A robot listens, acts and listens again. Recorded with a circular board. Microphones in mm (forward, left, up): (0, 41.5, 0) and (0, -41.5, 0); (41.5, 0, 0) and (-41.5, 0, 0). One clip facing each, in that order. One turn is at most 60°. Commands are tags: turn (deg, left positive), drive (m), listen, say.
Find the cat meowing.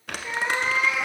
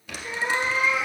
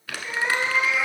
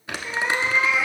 <turn deg="60"/>
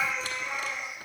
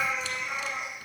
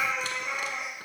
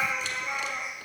<turn deg="-10"/>
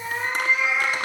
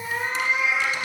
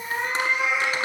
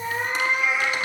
<turn deg="-10"/>
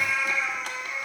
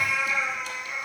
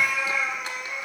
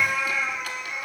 <turn deg="-10"/>
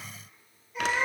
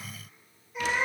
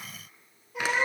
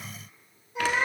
<say>Facing the cat meowing.</say>